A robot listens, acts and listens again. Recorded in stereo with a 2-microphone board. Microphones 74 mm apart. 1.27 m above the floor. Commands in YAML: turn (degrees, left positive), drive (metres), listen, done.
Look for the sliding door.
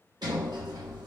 turn: -70
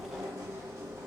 turn: -40
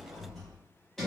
done: "Facing the sliding door."